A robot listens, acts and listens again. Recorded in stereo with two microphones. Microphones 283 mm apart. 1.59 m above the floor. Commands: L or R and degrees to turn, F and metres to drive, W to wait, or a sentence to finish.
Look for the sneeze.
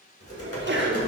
R40
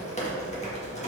W
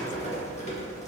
I heard a sneeze, but can't make it out now. It was about straight ahead or 100° right.